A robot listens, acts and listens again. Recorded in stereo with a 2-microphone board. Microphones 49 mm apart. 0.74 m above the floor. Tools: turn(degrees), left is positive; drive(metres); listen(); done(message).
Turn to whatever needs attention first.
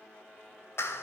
listen()
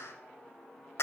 listen()
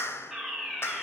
turn(degrees=-30)
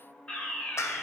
turn(degrees=25)
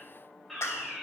done("Facing the fire alarm, over 4 m away.")